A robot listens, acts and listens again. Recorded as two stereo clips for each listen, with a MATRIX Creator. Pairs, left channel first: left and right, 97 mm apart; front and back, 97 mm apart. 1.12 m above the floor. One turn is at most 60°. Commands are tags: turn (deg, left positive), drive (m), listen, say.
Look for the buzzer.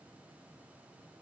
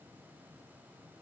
<listen/>
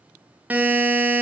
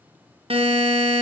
<turn deg="-60"/>
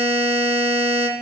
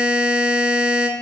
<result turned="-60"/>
<turn deg="-60"/>
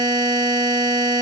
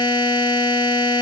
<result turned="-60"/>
<turn deg="-45"/>
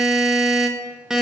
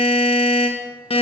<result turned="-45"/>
<say>Found it: a buzzer, straight ahead.</say>